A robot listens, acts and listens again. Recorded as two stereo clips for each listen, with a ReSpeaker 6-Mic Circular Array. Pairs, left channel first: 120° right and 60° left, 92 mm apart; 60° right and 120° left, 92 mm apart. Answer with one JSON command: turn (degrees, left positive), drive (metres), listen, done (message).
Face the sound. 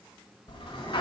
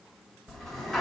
{"turn": -145}
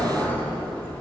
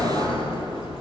{"turn": -45}
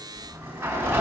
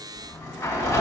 {"done": "Found it: a sliding door, straight ahead, 1 to 2 m away."}